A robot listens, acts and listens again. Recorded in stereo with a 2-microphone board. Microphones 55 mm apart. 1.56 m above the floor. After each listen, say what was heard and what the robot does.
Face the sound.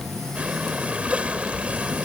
The breathing: about 20° right or 160° right. Turn 20° right.
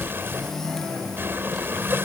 So it is at 140° right. Turn 140° right.
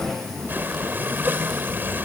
The breathing is now 40° right. Turn 40° right.
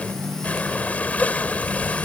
The breathing is now 25° left. Turn 25° left.
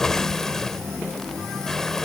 Found it: breathing, straight ahead.